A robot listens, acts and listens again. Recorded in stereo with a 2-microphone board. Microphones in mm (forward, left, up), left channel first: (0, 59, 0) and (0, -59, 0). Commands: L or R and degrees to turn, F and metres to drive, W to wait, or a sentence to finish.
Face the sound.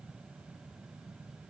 W
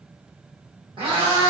R50
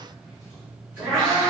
R10
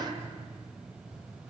W
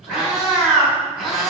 Facing the cat meowing, over 4 m away.